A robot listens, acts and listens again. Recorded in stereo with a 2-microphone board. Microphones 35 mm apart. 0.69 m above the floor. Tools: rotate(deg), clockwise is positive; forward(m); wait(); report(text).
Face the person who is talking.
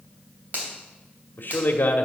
rotate(-65)
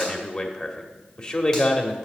rotate(-35)
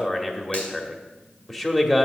rotate(-10)
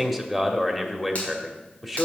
report("Facing the man speaking, 1 to 2 m away.")